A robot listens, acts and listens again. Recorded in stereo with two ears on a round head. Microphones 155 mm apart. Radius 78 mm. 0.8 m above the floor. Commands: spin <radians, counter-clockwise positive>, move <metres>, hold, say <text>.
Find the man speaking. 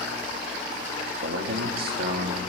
spin -1.05
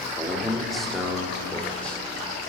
say Facing the man speaking, 2 to 4 m away.